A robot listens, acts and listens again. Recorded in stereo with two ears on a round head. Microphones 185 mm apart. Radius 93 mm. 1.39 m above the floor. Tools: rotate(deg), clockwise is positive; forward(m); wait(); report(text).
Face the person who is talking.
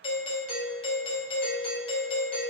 wait()
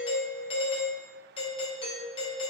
wait()
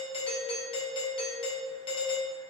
report("I can't make out anyone speaking to turn to.")